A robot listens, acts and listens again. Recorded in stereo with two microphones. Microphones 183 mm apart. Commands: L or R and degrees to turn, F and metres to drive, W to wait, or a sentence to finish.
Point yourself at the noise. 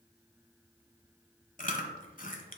L45
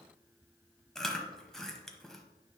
Found it: chewing, straight ahead.